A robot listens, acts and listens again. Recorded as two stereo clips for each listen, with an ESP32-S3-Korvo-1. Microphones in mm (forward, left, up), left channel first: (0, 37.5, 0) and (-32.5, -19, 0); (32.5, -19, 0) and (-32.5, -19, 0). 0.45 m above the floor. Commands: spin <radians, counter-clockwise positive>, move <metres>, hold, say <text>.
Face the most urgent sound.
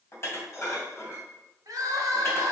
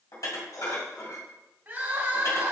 spin -2.27
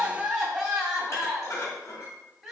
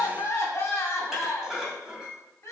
spin -0.70
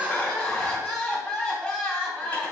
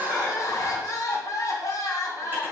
spin -0.26
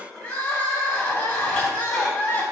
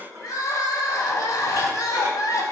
say Found it: crying, straight ahead, 1 to 2 m away.